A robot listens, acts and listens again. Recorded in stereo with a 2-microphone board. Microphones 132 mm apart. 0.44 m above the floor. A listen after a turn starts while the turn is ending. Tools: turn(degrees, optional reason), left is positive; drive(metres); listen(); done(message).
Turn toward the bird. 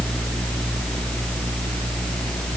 listen()
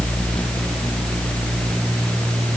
listen()
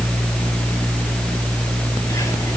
done("I can't make out a bird to turn to.")